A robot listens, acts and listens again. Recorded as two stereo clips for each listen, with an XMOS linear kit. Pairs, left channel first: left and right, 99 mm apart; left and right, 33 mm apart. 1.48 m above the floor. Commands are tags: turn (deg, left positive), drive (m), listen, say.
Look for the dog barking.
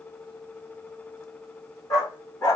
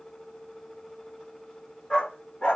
<turn deg="40"/>
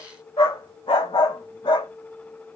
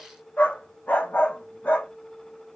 <turn deg="110"/>
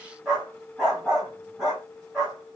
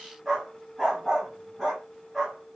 <say>Found it: a dog barking, straight ahead, 2 to 4 m away.</say>